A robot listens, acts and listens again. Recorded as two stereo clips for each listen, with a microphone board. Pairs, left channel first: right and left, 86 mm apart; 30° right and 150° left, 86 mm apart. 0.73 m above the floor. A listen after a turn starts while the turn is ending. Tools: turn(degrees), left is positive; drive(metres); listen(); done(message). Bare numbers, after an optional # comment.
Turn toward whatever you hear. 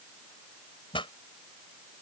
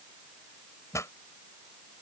# The pop: 80° right.
turn(-80)
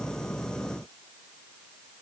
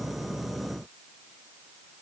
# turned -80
done("I heard a pop from this way, but can't make it out now.")